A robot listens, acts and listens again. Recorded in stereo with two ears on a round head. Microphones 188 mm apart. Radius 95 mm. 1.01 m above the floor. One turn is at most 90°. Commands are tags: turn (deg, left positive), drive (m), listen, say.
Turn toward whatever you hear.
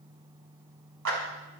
<turn deg="-75"/>
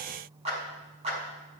<turn deg="-30"/>
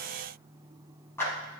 <turn deg="10"/>
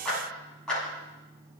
<say>Facing the clap, over 4 m away.</say>